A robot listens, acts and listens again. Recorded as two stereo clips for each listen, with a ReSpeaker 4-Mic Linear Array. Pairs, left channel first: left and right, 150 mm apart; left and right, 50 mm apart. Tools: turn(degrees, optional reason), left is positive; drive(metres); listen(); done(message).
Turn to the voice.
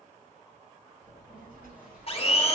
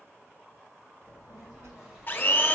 turn(degrees=-75, reason="The child speaking: about 75° right or 105° right.")
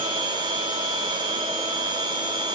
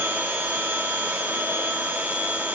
listen()
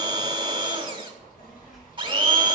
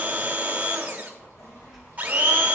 done("Found it: a child speaking, straight ahead.")